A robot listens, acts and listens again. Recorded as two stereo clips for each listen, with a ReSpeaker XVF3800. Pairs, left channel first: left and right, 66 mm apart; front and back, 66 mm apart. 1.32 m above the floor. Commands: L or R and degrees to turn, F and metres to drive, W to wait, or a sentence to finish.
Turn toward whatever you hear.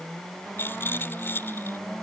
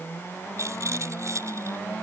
L145
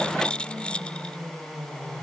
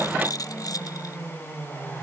L15
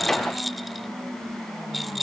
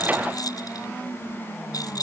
Found it: a rattle, straight ahead.